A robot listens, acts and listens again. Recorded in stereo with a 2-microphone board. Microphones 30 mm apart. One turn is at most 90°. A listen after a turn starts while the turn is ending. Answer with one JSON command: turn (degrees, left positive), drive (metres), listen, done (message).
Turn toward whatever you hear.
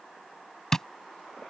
{"turn": 30}
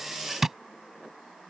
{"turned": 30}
{"turn": -15}
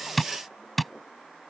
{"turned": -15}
{"done": "Facing the tapping."}